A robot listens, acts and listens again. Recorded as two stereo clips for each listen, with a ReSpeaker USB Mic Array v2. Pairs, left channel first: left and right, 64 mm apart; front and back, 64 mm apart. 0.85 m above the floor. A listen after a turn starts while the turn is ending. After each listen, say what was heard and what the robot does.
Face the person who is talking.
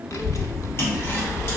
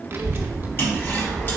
The child speaking: 125° left. Turn 125° left.
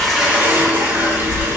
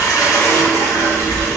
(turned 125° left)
The child speaking is now 40° left. Turn 40° left.
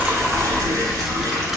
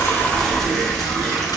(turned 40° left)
Found it: a child speaking, straight ahead.